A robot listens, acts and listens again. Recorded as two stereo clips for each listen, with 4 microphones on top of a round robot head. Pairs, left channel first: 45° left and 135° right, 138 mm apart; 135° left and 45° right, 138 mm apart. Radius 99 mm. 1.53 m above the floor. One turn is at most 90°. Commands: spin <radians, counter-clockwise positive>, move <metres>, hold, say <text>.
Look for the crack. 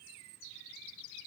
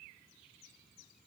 hold
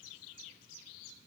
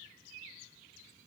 hold
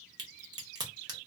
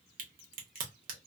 spin -1.22
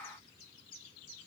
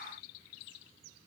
say Facing where the crack came from. I can't hear it now.